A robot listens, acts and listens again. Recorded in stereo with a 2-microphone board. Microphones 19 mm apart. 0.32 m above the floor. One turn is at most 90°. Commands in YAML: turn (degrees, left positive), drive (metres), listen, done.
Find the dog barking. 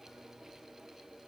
listen: true
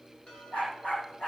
turn: 90
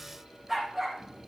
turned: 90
turn: 10
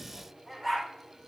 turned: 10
done: "Facing the dog barking."